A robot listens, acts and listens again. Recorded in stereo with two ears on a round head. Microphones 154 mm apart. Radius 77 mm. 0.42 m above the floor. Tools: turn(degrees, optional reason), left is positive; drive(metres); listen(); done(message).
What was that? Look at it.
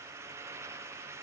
listen()
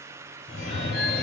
turn(degrees=70, reason="The phone ringing: about 70° left or 110° left.")
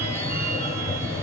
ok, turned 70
turn(degrees=15, reason="So it is at 15° left.")
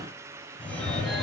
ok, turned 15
done("Facing the phone ringing, 1 to 2 m away.")